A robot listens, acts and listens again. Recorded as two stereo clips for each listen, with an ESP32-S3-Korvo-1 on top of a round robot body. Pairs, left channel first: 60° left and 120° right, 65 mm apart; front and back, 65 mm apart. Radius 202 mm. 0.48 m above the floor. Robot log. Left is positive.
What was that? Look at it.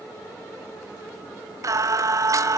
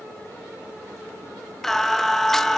note: The singing: 85° right.
cmd yaw -85
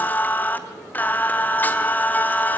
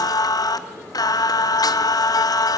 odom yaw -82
end: Facing the singing.